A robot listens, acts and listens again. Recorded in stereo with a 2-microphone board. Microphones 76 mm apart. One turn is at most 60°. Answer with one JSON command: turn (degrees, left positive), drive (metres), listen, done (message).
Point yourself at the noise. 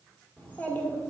{"turn": 30}
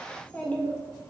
{"turn": 30}
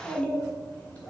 {"turn": 20}
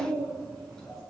{"turn": 10}
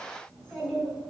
{"done": "Found it: a child speaking, straight ahead, 2 to 4 m away."}